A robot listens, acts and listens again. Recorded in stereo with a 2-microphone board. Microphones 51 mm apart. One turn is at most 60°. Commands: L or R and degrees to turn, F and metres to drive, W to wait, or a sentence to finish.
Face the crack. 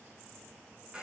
W
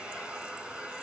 W
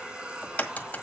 L30
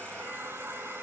W
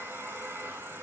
I heard a crack, but can't make it out now. It was about straight ahead or 120° left.